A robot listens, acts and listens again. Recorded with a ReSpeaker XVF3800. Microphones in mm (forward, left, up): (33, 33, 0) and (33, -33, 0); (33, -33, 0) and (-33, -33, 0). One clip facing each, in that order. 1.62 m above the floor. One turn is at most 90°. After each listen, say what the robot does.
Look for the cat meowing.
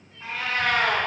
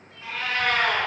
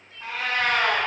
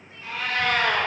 Turn 25° left.
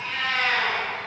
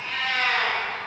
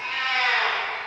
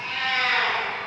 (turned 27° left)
Facing the cat meowing, 2 to 4 m away.